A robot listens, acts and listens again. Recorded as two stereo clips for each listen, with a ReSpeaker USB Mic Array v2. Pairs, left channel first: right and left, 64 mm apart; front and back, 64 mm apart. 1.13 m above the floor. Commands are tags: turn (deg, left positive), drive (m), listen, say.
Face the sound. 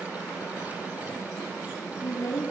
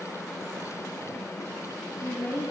<turn deg="-60"/>
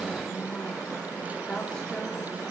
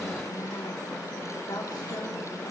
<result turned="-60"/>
<turn deg="-15"/>
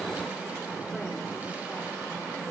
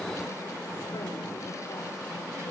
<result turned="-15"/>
<listen/>
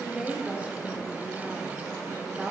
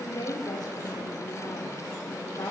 <turn deg="20"/>
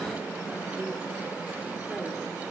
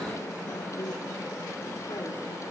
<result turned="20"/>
<listen/>
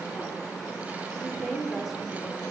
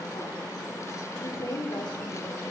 <say>Found it: a woman speaking, straight ahead.</say>